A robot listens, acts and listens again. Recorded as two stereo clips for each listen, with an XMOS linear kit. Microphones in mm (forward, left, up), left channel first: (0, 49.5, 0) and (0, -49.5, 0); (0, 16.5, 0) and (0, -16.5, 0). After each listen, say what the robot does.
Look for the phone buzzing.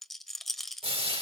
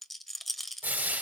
Keep listening.
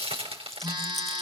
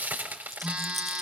Turn 50° right.
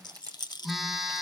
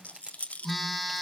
Found it: a phone buzzing, straight ahead, 1 to 2 m away.